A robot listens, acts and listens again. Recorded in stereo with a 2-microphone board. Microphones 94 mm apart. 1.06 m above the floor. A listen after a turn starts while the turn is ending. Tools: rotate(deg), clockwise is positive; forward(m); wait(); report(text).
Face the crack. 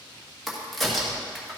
rotate(-30)
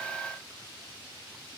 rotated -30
wait()
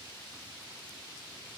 report("I heard a crack, but can't make it out now. It was about 30° right or 150° left.")